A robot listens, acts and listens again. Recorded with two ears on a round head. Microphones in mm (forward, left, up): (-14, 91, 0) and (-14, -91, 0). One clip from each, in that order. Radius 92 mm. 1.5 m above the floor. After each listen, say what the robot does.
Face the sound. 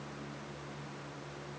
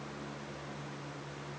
Keep listening.
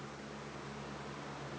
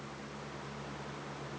Keep listening.
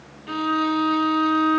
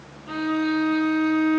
Turn 60° left.
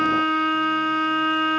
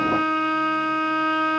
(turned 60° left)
Found it: a violin, straight ahead.